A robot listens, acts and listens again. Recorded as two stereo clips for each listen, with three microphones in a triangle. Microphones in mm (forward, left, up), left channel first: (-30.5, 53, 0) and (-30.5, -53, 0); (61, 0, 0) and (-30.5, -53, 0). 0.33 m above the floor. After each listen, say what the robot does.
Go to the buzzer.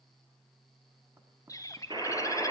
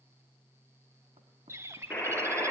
Turn 45° right.
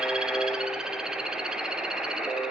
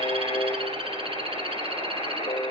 Drive 1.0 m forward.
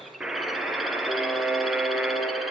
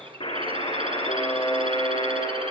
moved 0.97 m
Turn 10° right.
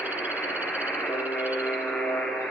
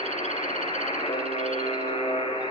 Drive 1.0 m forward.
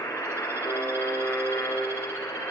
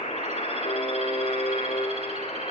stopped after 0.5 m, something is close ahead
Turn 20° left.
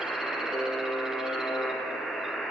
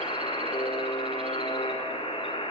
Something is in my way. I am facing the buzzer but have not reached it.